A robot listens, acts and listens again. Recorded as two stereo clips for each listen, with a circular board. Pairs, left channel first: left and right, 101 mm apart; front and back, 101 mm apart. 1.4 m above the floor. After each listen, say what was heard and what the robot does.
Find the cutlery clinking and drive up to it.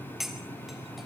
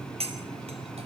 The cutlery clinking: straight behind. Turn 180° left.
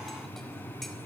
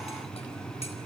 Keep listening.
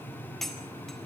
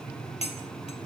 Drive 1.0 m forward.
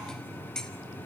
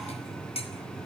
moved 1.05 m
Drive 1.0 m forward.
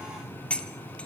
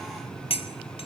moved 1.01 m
The cutlery clinking is now 10° left. Turn 10° left.
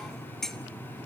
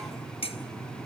Drive 1.0 m forward.
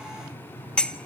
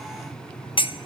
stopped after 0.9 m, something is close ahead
The cutlery clinking is now 10° left. Turn 10° left.
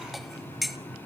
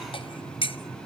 Arrived at the cutlery clinking, straight ahead.